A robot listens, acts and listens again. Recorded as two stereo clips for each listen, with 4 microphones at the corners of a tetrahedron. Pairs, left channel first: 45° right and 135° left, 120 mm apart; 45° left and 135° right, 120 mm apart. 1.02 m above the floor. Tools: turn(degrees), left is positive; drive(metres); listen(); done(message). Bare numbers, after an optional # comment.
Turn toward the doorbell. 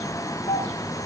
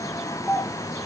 # The doorbell: 30° right.
turn(-30)
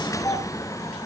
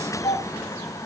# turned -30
# The doorbell is now 15° left.
turn(15)
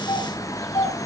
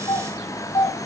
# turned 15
done("Found it: a doorbell, straight ahead, over 4 m away.")